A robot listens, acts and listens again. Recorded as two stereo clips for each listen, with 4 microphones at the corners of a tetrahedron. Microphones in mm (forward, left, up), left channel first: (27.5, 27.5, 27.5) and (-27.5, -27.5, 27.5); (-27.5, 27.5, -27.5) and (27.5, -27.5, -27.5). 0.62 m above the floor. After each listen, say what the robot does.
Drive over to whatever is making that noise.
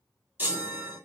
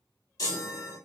Turn 160° left.
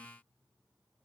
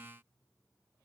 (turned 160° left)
Keep listening.
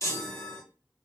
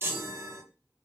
Drive 1.0 m forward.
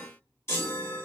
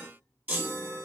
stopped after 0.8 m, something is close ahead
Turn 10° left.
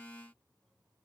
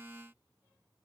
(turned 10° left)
Keep listening.
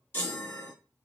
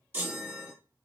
Arrived at the chime, straight ahead.